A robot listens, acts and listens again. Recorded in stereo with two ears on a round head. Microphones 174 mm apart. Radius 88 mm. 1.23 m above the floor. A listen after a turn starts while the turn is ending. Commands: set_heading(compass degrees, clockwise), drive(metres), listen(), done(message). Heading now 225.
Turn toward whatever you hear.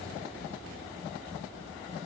listen()
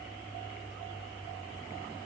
listen()
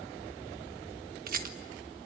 set_heading(280)
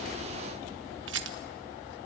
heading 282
set_heading(352)
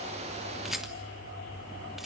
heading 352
done("Facing the rattle.")